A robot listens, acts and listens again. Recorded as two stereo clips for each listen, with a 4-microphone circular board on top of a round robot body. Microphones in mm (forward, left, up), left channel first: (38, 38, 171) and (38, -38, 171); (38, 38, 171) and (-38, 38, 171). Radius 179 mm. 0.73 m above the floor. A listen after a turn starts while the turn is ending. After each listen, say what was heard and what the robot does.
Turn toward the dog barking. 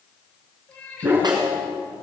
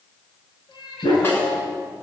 The dog barking: 25° right. Turn 25° right.
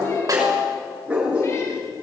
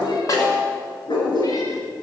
The dog barking is now 15° right. Turn 15° right.
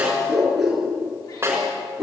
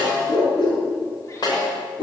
Found it: a dog barking, straight ahead.